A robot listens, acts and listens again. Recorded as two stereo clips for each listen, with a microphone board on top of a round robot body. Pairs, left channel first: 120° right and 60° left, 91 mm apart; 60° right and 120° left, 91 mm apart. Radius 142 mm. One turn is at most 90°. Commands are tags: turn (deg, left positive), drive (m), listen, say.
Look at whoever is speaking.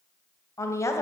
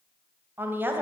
<turn deg="-90"/>
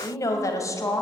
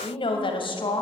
<turn deg="-65"/>
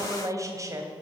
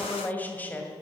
<turn deg="10"/>
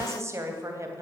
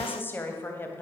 <say>Found it: a woman speaking, straight ahead, 2 to 4 m away.</say>